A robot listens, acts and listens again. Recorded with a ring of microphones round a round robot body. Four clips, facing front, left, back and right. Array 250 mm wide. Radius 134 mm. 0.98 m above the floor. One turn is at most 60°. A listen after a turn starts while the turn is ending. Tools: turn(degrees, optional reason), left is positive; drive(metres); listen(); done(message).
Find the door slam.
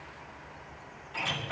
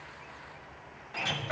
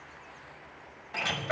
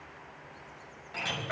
turn(degrees=60, reason="The door slam: straight behind.")
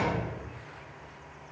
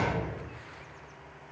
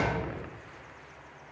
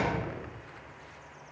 turn(degrees=60, reason="Nothing new. It was at 120° left.")
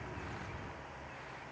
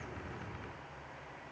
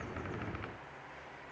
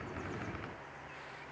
turn(degrees=60, reason="Nothing new. It was at 60° left.")
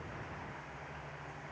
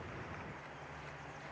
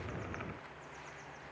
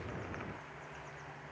done("I heard a door slam from this way, but can't make it out now.")